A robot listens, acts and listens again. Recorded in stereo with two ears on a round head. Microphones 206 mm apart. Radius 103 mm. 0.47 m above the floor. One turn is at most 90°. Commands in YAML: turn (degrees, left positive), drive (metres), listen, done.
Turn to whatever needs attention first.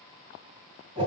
listen: true
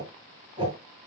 listen: true
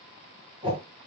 done: "I can't make out anything urgent to turn to."